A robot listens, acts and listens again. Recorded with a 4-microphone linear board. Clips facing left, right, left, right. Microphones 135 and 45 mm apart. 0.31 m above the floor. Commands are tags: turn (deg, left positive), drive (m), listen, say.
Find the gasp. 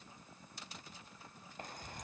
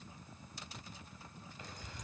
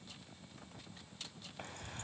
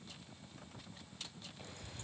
<listen/>
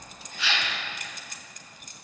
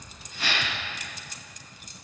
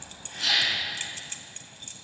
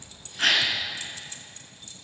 <turn deg="-45"/>
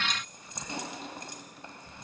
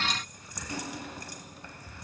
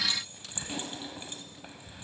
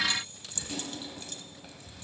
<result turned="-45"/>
<listen/>
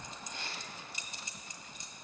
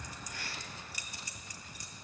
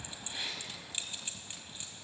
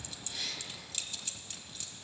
<say>I heard a gasp, but can't make it out now. It was about straight ahead or 90° right.</say>